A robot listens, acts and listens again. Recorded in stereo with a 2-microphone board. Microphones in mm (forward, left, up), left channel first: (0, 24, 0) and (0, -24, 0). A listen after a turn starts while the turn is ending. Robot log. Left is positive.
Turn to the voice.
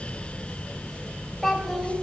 cmd yaw +30
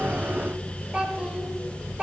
note: So it is at 20° right.
cmd yaw -20
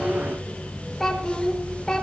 note: The child speaking is now 10° left.
cmd yaw +10
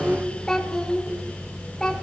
note: The child speaking is now 10° left.
cmd yaw +10
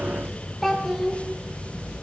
end: Facing the child speaking.